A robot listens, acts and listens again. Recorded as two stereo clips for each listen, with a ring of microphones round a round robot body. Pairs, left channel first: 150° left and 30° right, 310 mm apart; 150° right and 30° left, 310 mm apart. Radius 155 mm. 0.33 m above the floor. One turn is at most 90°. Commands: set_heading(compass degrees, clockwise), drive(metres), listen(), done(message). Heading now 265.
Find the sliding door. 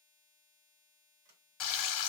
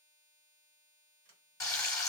set_heading(295)
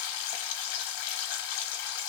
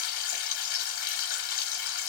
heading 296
listen()
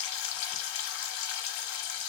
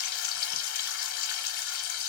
listen()
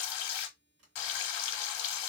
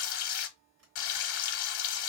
done("Found it: a sliding door, straight ahead, 2 to 4 m away.")